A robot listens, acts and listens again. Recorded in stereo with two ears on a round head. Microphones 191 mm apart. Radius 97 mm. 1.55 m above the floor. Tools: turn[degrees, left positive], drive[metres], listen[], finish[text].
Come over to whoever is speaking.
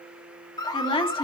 Thought: The woman speaking: about 25° left or 155° left.
Action: turn[25]
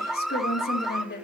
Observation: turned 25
Thought: So it is at 130° left.
Action: turn[130]
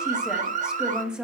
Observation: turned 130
Action: drive[1.0]
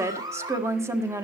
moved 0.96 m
Thought: The woman speaking is now 15° right.
Action: turn[-15]
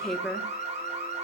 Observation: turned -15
Action: drive[1.0]
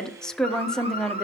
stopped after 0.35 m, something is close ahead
Action: finish[I am next to the woman speaking.]